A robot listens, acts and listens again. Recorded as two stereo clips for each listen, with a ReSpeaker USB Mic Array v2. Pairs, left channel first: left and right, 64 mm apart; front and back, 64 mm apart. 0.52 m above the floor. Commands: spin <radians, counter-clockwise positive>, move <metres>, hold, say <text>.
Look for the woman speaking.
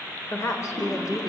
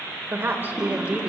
spin 1.92
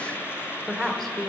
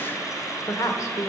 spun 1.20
say Facing the woman speaking.